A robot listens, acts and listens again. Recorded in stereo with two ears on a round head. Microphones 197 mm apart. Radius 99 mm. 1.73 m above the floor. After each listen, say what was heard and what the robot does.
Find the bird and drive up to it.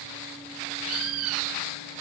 Turn 90° right.
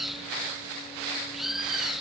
Drive 1.0 m forward.
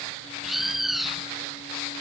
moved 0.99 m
Drive 1.0 m forward.
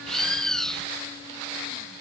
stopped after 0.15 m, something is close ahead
Arrived at the bird, straight ahead.